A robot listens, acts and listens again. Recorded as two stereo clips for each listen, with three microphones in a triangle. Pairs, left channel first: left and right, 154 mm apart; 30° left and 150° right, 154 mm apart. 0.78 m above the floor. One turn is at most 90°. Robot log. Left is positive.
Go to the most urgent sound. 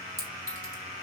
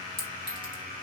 cmd idle
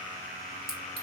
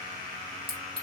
cmd idle
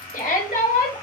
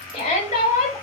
note: The shout: 80° left.
cmd yaw +80
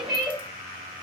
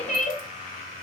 cmd fwd 1.0
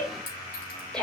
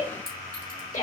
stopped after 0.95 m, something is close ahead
end: Arrived at the shout, straight ahead.